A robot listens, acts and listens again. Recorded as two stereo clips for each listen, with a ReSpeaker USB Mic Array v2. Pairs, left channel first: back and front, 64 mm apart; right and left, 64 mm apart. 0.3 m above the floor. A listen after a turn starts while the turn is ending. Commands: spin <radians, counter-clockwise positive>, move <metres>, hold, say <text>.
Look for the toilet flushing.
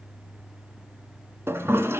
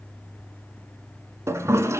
spin 0.87
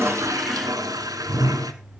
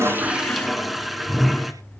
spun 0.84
say Found it: a toilet flushing, straight ahead.